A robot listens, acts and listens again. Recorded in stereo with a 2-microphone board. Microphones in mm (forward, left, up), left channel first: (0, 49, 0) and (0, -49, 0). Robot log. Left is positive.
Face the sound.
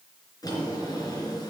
note: The drawer: about 40° left or 140° left.
cmd yaw +40
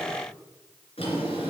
note: So it is at 100° left.
cmd yaw +100
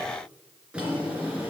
note: The drawer is now 10° right.
cmd yaw -10
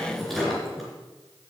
end: Found it: a drawer, straight ahead, 2 to 4 m away.